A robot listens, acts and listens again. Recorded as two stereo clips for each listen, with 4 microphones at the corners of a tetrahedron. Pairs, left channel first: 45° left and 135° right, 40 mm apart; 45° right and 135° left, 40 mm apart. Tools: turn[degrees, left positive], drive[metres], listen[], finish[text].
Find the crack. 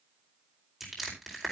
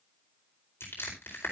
Action: listen[]
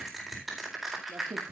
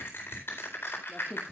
Thought: The crack: 120° right.
Action: turn[-120]
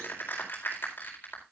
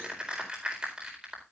Action: finish[I heard a crack from this way, but can't make it out now.]